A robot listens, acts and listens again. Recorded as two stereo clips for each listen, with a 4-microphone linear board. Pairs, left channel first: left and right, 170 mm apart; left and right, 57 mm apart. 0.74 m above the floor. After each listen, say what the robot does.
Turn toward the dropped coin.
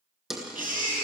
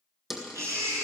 Turn 30° left.
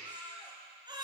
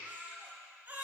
Keep listening.
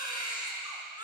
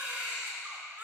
I heard a dropped coin, but can't make it out now. It was about 30° right or 150° left.